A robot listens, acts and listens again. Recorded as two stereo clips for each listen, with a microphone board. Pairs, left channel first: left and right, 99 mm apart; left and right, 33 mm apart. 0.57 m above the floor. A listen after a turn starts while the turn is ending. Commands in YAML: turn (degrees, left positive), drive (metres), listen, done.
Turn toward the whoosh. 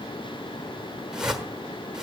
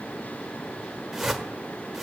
turn: -30
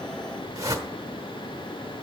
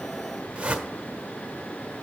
turn: -145
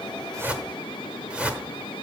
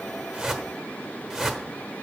turn: -15
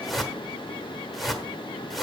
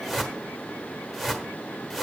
done: "Found it: a whoosh, straight ahead, 1 to 2 m away."